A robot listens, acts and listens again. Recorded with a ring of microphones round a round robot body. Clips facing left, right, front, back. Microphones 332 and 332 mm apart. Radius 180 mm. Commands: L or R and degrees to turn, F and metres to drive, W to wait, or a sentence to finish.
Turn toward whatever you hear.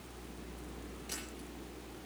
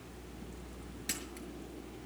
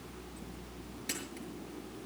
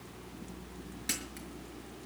W
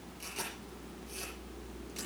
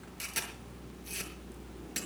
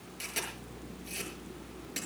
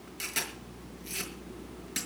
R120
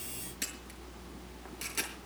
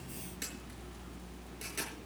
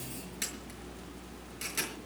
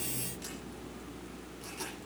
L15
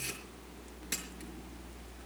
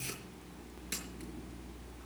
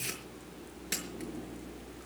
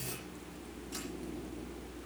W
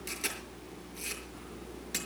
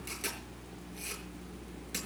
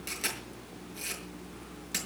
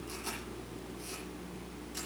Facing the camera shutter.